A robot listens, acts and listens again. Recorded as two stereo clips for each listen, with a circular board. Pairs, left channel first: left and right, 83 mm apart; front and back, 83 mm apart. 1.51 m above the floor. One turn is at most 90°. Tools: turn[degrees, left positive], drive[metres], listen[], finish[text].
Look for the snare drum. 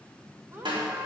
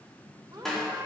Thought: The snare drum: 85° right.
Action: turn[-85]
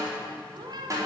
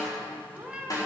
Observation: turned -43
Thought: The snare drum is now 45° right.
Action: turn[-45]
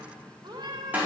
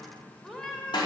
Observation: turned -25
Thought: The snare drum is now 20° right.
Action: turn[-20]
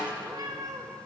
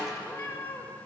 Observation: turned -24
Action: listen[]
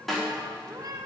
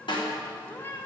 Action: finish[Facing the snare drum, over 4 m away.]